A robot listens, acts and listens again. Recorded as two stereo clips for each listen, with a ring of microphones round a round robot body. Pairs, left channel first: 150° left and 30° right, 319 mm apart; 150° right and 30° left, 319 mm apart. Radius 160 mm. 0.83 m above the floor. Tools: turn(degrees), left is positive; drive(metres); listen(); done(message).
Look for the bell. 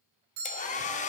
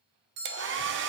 turn(degrees=10)
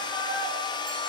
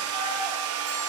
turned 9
listen()
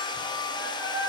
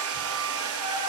listen()
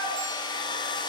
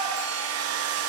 done("I heard a bell from this way, but can't make it out now.")